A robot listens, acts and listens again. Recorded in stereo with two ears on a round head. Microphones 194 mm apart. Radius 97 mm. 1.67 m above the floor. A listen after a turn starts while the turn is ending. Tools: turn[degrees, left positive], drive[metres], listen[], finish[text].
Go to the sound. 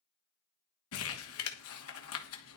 Thought: The crumpling: about 75° left or 105° left.
Action: turn[75]
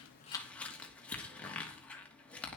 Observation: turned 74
Action: drive[1.0]
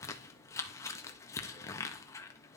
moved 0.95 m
Thought: The crumpling is now 15° left.
Action: turn[15]
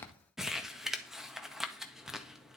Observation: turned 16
Action: drive[1.0]
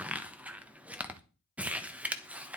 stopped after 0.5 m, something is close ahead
Thought: The crumpling is now 10° right.
Action: turn[-10]
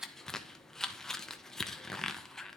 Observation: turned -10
Action: finish[Arrived at the crumpling, straight ahead.]